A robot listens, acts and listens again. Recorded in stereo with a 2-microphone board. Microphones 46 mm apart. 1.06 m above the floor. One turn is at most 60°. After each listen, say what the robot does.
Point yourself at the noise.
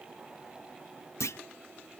Turn 60° left.
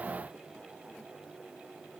Turn 30° left.
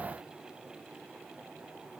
I heard a clunk from this way, but can't make it out now.